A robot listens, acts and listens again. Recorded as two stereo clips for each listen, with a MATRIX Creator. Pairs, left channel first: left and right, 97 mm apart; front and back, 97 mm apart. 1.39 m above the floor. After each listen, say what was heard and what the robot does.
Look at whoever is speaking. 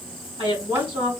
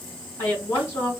The woman speaking: 60° right. Turn 60° right.
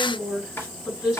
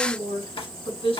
The woman speaking is now 10° right. Turn 10° right.
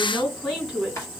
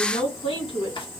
Found it: a woman speaking, straight ahead.